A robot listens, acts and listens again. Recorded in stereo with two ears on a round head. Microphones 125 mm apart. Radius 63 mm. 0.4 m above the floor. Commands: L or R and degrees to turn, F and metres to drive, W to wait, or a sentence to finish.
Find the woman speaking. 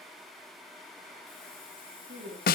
R90
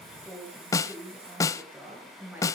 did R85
R15
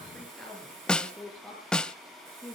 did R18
Facing the woman speaking.